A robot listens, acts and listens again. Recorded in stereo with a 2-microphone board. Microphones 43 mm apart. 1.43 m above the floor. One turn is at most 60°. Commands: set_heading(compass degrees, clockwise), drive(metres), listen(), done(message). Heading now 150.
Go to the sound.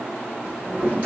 set_heading(180)
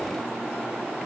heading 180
listen()
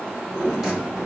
drive(1.0)
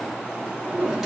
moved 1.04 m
set_heading(190)
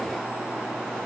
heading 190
listen()
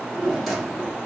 drive(1.0)
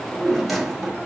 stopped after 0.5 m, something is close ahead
done("Arrived at the drawer, straight ahead.")